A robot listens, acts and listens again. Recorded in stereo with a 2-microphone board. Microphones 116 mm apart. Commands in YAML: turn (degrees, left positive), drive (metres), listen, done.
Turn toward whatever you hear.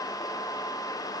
listen: true
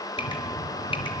turn: 45
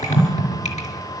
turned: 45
turn: 90
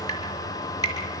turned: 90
turn: 35
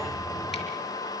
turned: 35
listen: true
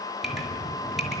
done: "Facing the dripping, over 4 m away."